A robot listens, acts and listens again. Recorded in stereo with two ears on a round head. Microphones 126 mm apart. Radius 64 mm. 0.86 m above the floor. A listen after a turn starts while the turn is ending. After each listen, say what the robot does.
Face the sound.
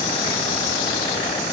Keep listening.
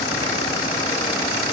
Keep listening.
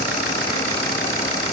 I can't make out anything.